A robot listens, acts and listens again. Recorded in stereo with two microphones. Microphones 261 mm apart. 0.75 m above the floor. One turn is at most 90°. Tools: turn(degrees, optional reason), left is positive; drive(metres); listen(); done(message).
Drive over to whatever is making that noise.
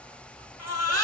turn(degrees=75, reason="The baby crying: about 75° left or 105° left.")
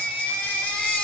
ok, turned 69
drive(metres=1.0)
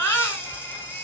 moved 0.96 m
turn(degrees=10, reason="The baby crying is now 10° left.")
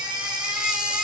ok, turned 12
drive(metres=1.0)
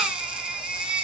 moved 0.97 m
drive(metres=1.0)
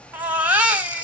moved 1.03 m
drive(metres=1.0)
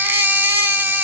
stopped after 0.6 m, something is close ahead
turn(degrees=-10, reason="The baby crying is now 10° right.")
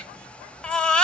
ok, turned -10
done("I am next to the baby crying.")